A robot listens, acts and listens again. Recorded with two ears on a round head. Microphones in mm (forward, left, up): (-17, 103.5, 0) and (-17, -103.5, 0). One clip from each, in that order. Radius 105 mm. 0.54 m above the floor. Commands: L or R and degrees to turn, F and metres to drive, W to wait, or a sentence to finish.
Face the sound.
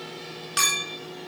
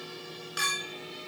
L55
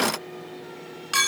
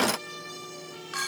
L70
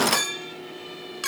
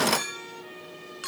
L20
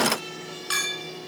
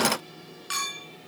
Facing the clink, 2 to 4 m away.